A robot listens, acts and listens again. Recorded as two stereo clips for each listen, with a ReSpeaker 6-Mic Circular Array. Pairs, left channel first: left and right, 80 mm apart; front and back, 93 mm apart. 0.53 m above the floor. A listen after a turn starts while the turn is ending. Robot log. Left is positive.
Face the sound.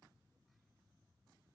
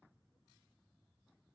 cmd idle
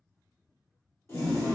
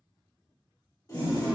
note: The toilet flushing: 40° left.
cmd yaw +40
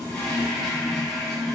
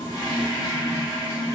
end: Found it: a toilet flushing, straight ahead, 1 to 2 m away.